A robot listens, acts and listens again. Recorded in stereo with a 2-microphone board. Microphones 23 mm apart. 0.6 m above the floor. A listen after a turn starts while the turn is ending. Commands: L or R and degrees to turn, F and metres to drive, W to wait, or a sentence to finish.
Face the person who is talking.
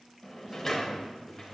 R35
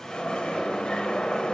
W
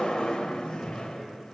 W
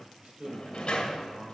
R105
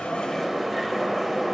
W
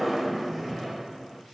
W
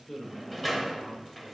L25
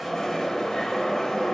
W
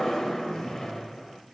W
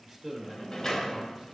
Facing the man speaking, 2 to 4 m away.